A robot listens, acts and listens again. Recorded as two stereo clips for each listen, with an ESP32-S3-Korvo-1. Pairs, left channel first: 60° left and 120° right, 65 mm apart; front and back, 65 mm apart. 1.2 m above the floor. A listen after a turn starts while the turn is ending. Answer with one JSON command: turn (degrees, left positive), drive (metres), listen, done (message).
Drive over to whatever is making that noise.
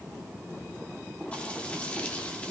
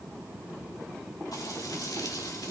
{"turn": -10}
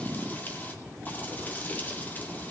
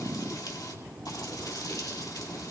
{"drive": 1.0}
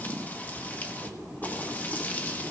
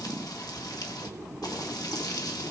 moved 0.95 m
{"drive": 1.0}
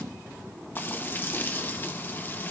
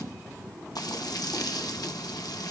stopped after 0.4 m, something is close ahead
{"done": "I am next to the frying."}